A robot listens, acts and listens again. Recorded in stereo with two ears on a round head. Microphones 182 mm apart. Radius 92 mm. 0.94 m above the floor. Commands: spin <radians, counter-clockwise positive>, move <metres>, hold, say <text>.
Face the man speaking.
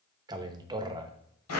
spin -0.35
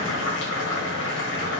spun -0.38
hold
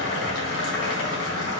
hold
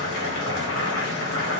say I heard a man speaking, but can't make it out now. It was about straight ahead or 135° right.